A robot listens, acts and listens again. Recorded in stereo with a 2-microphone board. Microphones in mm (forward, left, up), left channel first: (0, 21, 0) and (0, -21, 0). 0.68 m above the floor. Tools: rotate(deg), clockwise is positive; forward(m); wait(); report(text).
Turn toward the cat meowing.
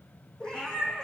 rotate(-30)
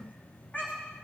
rotate(-145)
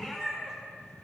rotate(15)
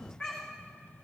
report("Facing the cat meowing, over 4 m away.")